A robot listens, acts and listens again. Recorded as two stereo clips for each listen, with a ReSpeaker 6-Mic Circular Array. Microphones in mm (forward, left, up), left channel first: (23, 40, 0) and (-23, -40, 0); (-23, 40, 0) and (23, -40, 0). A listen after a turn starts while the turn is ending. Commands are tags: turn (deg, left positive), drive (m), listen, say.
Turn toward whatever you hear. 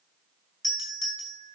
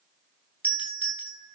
<turn deg="10"/>
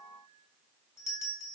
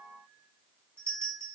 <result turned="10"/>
<say>Found it: a doorbell, straight ahead.</say>